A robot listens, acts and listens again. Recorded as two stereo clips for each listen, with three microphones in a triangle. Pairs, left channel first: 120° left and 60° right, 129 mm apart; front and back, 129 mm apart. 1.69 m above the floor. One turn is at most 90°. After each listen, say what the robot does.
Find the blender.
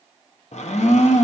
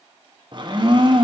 Turn 90° left.
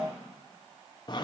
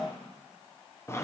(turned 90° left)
Turn 65° left.
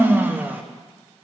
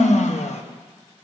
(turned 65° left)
Turn 15° left.
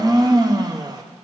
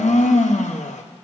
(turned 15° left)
Facing the blender.